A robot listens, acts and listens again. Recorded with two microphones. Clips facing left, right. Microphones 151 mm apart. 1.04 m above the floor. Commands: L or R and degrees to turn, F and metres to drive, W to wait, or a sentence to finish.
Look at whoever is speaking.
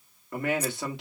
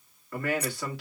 L20
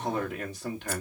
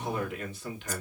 L140
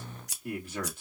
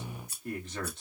L10
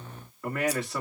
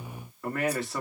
Facing the man speaking.